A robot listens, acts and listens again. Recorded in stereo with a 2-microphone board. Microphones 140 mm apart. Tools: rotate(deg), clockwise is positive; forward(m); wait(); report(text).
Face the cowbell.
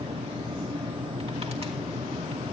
wait()
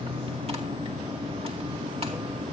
wait()
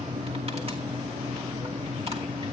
report("I can't make out a cowbell.")